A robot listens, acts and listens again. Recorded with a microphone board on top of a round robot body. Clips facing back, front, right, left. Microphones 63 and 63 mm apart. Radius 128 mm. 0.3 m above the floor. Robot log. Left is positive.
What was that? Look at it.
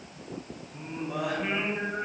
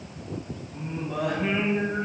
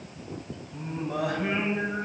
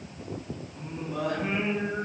note: The singing: 95° right.
cmd yaw -95
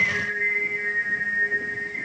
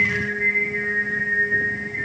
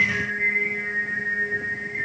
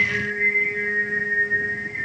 note: The singing is now 10° left.
cmd yaw +10
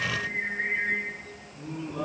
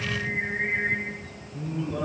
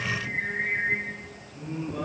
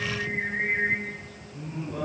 end: Facing the singing, over 4 m away.